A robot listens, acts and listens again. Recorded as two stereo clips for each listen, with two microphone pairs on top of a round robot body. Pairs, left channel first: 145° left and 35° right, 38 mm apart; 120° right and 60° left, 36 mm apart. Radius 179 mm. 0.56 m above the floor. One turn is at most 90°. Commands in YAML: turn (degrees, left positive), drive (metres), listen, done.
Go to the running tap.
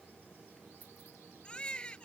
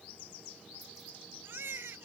listen: true
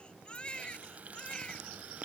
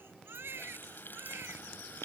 turn: -85
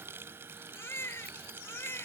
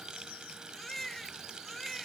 turn: -10
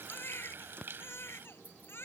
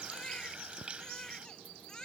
drive: 1.0
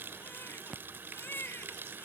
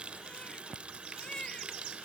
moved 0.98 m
drive: 1.0
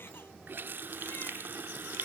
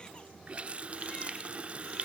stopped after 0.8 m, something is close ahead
done: "I am next to the running tap."